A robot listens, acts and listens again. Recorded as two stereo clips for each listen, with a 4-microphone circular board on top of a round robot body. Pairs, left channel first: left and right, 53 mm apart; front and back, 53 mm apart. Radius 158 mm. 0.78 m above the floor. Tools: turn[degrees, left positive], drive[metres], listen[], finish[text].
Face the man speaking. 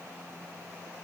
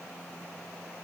Action: listen[]
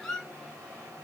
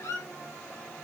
Action: listen[]
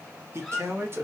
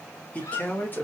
Thought: The man speaking: 50° right.
Action: turn[-50]
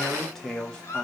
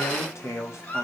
Thought: The man speaking is now 15° left.
Action: turn[15]
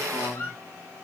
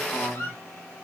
Thought: The man speaking is now 20° left.
Action: turn[20]
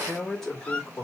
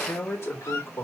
Thought: The man speaking is now 20° left.
Action: turn[20]
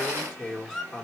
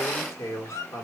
Action: finish[Found it: a man speaking, straight ahead, 2 to 4 m away.]